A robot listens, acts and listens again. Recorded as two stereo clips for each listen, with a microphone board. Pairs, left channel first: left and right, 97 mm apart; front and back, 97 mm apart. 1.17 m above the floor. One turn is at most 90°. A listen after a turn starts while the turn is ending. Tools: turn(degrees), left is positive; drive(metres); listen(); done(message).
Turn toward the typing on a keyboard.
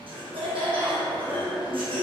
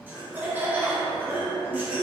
listen()
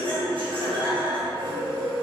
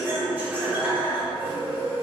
listen()
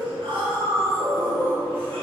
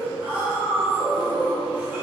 done("I can't make out typing on a keyboard, only laughter.")